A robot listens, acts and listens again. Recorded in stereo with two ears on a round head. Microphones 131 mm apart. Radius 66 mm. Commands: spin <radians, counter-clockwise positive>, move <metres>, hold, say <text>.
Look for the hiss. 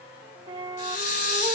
spin 1.13
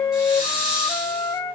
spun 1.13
say Found it: a hiss, straight ahead.